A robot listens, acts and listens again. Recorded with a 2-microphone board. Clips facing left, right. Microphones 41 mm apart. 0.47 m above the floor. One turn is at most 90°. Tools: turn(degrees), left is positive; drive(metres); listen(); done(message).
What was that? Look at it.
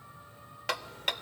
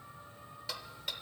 turn(degrees=60)
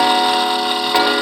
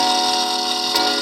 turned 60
turn(degrees=30)
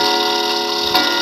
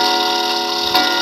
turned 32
done("Facing the ticking.")